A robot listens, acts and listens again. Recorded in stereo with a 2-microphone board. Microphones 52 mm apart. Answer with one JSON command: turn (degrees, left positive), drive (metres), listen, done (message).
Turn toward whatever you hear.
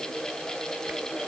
{"listen": true}
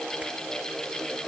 {"listen": true}
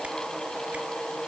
{"done": "I can't make out anything to turn to."}